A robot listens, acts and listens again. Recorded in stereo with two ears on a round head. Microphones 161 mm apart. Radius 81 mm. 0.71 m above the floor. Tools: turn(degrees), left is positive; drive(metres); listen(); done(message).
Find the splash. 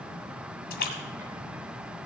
turn(degrees=65)
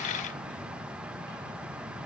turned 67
listen()
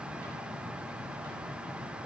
done("I heard a splash, but can't make it out now. It was about straight ahead or 45° left.")